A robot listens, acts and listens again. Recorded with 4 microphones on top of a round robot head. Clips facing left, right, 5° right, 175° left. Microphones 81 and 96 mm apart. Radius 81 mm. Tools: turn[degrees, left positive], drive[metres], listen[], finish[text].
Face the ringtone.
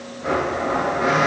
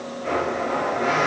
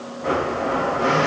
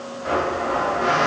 Action: listen[]
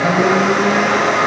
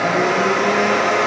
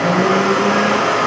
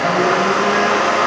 Action: listen[]
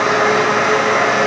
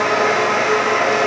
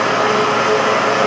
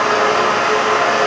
Action: finish[I can't make out a ringtone to turn to.]